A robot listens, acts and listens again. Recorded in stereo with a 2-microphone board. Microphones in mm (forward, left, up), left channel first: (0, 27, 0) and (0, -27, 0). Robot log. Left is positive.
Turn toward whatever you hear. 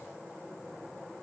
cmd idle
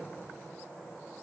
cmd idle
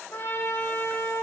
note: The trumpet: about 55° left or 125° left.
cmd yaw +55
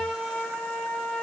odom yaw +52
end: Found it: a trumpet, straight ahead, 2 to 4 m away.